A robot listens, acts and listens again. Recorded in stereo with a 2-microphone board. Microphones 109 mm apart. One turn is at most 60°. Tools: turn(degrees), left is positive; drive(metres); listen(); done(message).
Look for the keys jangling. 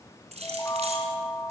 turn(degrees=-60)
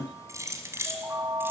turn(degrees=-25)
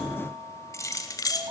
turn(degrees=35)
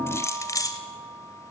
turn(degrees=35)
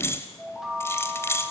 turn(degrees=25)
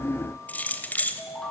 turn(degrees=15)
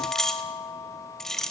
done("Facing the keys jangling, 1 to 2 m away.")